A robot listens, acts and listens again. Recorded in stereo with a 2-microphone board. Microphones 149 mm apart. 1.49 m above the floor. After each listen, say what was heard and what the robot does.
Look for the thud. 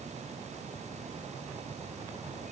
Keep listening.
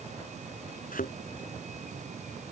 The thud: about 70° left or 110° left. Turn 70° left.
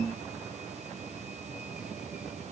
Keep listening.
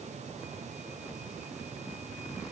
I heard a thud, but can't make it out now. It was about straight ahead or 40° left.